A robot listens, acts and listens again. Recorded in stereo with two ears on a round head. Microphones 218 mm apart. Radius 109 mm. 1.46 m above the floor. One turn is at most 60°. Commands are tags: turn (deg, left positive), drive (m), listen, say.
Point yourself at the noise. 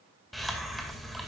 <turn deg="30"/>
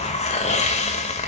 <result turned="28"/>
<turn deg="60"/>
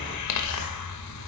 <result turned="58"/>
<turn deg="60"/>
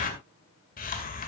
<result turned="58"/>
<turn deg="35"/>
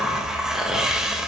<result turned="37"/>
<say>Found it: a hiss, straight ahead, 2 to 4 m away.</say>